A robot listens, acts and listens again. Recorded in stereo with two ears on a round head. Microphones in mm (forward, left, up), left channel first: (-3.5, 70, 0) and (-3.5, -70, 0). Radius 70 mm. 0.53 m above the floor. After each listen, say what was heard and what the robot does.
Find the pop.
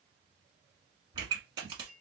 The pop: about 30° right or 150° right. Turn 30° right.
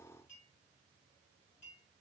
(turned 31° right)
Keep listening.
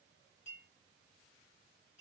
I heard a pop, but can't make it out now. It was about straight ahead or 120° right.